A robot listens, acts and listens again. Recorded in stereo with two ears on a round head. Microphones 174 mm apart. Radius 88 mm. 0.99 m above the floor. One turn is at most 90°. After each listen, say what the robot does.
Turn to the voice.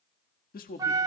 Turn 50° left.
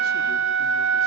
Keep listening.
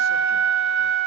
Keep listening.
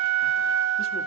I heard a man speaking, but can't make it out now. It was about straight ahead or 80° left.